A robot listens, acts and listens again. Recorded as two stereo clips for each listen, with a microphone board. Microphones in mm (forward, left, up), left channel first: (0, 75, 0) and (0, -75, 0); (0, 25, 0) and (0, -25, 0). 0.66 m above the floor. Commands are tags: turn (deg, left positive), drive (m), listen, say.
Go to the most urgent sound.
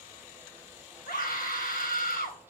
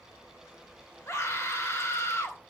<turn deg="90"/>
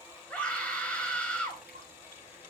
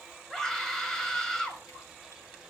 <turn deg="10"/>
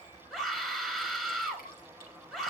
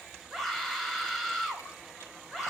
<drive m="1.0"/>
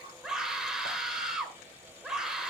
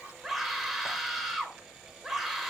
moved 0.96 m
<drive m="1.0"/>
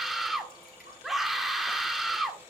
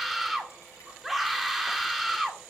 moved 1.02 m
<drive m="1.0"/>
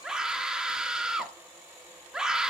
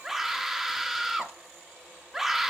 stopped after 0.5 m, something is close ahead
<say>Arrived at the scream, straight ahead.</say>